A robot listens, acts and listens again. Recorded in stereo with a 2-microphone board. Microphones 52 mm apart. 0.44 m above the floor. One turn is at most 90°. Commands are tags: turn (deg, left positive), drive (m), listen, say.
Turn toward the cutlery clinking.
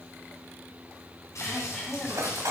<turn deg="-70"/>
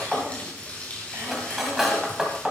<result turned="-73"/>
<say>Facing the cutlery clinking, 1 to 2 m away.</say>